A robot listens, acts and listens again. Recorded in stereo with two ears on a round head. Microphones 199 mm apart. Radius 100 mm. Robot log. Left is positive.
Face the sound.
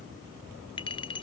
note: The clink: about 25° left or 155° left.
cmd yaw +25
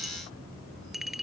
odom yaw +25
end: Found it: a clink, straight ahead.